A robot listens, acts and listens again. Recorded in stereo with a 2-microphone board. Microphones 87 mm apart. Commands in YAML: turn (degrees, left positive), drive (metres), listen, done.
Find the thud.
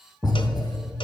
turn: 30
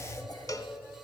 listen: true
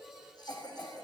done: "I heard a thud, but can't make it out now. It was about straight ahead or 120° left."